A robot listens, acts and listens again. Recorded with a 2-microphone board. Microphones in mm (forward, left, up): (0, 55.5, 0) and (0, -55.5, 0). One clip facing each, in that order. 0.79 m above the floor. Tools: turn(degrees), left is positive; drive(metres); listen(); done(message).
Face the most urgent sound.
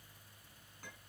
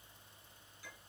listen()
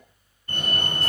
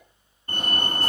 turn(degrees=-40)
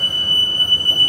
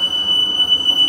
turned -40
turn(degrees=-95)
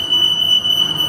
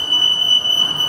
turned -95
turn(degrees=-30)
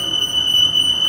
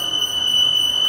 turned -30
turn(degrees=-20)
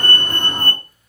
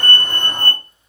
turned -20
done("Found it: a fire alarm, straight ahead.")